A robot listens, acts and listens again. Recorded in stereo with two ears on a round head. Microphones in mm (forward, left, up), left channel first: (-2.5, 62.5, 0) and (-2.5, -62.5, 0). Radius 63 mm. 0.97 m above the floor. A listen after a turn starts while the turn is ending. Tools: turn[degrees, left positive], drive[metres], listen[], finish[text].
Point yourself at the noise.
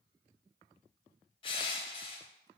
Thought: The crushing: about 40° left or 140° left.
Action: turn[40]
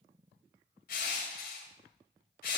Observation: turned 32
Thought: So it is at 105° left.
Action: turn[105]
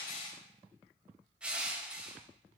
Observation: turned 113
Thought: The crushing is now 10° right.
Action: turn[-10]
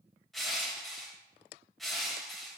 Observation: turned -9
Action: finish[Facing the crushing.]